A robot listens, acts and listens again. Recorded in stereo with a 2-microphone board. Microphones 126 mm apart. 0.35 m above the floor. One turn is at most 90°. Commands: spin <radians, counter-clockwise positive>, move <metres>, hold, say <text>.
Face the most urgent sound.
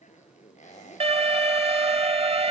spin -0.87
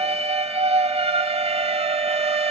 spin -1.13
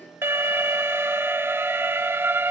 spin -0.35
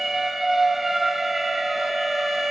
say Found it: an alarm, straight ahead, under 1 m away.